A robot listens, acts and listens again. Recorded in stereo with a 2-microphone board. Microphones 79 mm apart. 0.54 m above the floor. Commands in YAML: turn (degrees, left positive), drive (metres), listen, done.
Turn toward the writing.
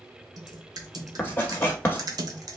turn: 30
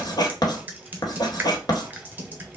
turn: 120
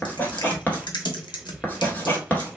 turn: 25
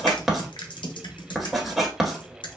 done: "Found it: writing, straight ahead."